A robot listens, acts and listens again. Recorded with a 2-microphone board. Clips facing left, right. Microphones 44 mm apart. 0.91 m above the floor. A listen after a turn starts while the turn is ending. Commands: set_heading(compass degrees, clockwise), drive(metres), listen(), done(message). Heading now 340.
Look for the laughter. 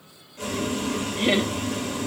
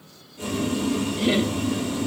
set_heading(300)
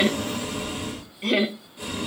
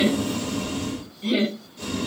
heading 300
set_heading(215)
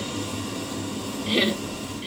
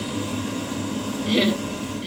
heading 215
set_heading(205)
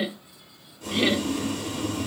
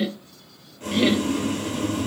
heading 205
done("Facing the laughter, under 1 m away.")